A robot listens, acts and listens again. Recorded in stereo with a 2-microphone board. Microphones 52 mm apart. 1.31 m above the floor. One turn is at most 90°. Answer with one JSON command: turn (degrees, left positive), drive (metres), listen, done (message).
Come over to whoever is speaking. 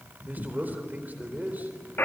{"turn": -35}
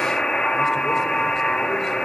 {"listen": true}
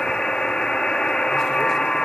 {"listen": true}
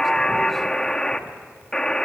{"done": "I heard a man speaking, but can't make it out now. It was about straight ahead or 110° right. I did not reach it."}